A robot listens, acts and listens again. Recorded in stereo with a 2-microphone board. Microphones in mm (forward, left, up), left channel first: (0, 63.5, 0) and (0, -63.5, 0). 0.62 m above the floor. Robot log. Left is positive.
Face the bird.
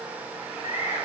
cmd yaw +90
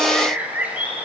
note: So it is at 15° right.
cmd yaw -15
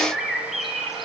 end: Facing the bird.